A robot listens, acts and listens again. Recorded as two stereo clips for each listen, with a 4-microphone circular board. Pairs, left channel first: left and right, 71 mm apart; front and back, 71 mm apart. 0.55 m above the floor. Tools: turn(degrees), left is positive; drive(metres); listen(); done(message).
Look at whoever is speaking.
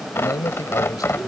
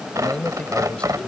turn(degrees=70)
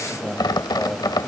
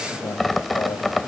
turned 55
turn(degrees=15)
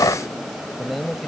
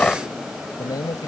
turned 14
done("Facing the man speaking.")